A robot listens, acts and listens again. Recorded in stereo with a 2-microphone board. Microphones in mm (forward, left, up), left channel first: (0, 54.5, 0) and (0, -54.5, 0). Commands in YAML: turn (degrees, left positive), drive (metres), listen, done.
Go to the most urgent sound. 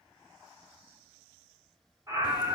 turn: -25
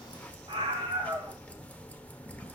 turn: -125
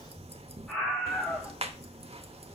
drive: 1.0
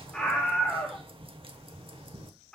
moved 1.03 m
turn: 10
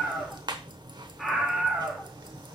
drive: 1.0
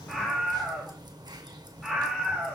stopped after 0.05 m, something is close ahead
done: "I am next to the scream."